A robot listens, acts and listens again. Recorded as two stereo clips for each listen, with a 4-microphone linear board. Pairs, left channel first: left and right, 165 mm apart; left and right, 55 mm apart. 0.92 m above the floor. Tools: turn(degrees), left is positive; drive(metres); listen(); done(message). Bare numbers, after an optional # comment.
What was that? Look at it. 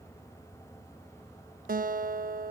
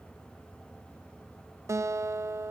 # The guitar: about 60° right or 120° right.
turn(-60)
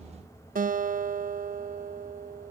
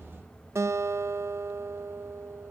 # So it is at 60° right.
turn(-60)
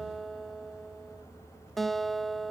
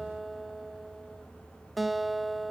done("Found it: a guitar, straight ahead, under 1 m away.")